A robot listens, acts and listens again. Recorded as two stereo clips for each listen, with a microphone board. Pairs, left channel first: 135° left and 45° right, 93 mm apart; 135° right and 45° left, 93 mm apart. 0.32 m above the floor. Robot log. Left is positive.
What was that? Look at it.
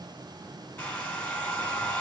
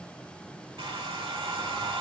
note: The hair dryer: 60° left.
cmd yaw +60
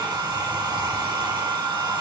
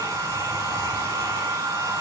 end: Found it: a hair dryer, straight ahead, under 1 m away.